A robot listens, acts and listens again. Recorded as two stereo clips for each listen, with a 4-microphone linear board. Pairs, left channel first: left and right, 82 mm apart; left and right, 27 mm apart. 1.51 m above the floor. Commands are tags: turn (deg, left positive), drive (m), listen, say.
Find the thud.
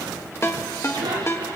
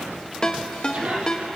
<listen/>
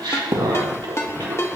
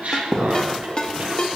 <turn deg="-45"/>
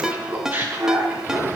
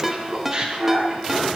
<listen/>
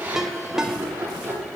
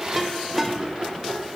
<say>I heard a thud, but can't make it out now. It was about straight ahead or 90° right.</say>